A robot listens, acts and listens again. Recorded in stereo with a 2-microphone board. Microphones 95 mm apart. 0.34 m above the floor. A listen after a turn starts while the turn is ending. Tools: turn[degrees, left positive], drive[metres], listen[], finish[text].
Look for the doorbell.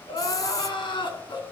Action: listen[]
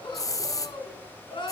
Action: listen[]
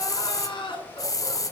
Action: finish[I can't make out a doorbell to turn to.]